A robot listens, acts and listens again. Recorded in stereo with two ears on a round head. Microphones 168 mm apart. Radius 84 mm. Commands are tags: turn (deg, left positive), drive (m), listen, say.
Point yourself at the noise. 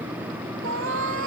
<turn deg="-90"/>
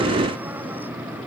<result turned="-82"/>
<turn deg="-10"/>
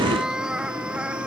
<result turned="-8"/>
<say>Found it: a cat meowing, straight ahead.</say>